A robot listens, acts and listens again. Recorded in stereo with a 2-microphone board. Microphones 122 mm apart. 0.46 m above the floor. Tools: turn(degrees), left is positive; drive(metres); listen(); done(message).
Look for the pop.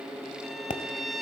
turn(degrees=90)
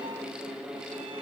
done("I heard a pop from this way, but can't make it out now.")